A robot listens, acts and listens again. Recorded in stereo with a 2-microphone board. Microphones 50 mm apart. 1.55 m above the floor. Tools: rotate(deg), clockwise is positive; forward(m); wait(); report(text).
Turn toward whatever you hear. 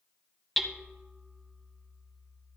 rotate(-30)
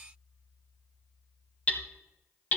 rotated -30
rotate(-145)
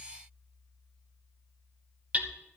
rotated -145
rotate(35)
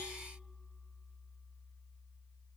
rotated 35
wait()
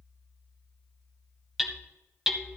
report("Found it: hammering, straight ahead, under 1 m away.")